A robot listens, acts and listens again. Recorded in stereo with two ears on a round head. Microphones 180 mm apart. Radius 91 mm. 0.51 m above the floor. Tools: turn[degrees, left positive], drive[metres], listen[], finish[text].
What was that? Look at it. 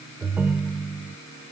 Action: turn[-30]
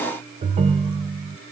Thought: So it is at 135° right.
Action: turn[-135]
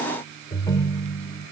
Thought: The ringtone is now 25° left.
Action: turn[25]
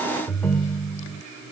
Thought: The ringtone is now 10° left.
Action: turn[10]
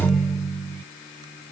Action: finish[Found it: a ringtone, straight ahead.]